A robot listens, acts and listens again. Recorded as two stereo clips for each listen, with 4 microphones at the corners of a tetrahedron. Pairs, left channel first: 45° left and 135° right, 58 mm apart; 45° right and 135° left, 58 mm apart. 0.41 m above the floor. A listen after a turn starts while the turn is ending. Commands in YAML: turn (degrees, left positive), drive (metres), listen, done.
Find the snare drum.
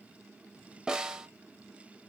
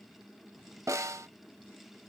turn: 150
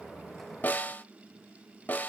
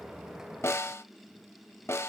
turn: -15
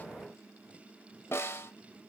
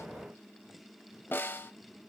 done: "Facing the snare drum."